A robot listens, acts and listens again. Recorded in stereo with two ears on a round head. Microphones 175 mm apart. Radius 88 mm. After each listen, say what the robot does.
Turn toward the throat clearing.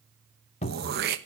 Turn 50° right.
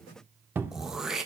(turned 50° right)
Found it: throat clearing, straight ahead, 1 to 2 m away.